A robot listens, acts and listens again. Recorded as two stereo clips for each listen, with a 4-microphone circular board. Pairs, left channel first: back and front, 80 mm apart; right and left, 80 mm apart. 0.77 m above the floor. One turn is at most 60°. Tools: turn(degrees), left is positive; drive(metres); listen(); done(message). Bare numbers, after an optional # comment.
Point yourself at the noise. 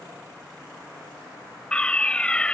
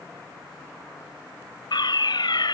# The fire alarm: 105° right.
turn(-60)
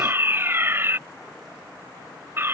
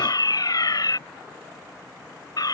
# The fire alarm is now 60° right.
turn(-60)
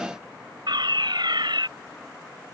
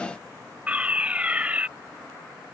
# The fire alarm is now 15° left.
turn(15)
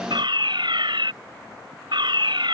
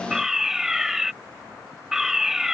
done("Found it: a fire alarm, straight ahead.")